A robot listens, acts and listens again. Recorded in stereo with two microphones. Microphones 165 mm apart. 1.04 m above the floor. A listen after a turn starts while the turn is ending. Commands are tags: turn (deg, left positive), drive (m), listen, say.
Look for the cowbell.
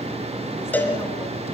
<turn deg="30"/>
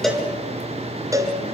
<turn deg="-20"/>
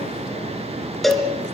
<say>Found it: a cowbell, straight ahead, 2 to 4 m away.</say>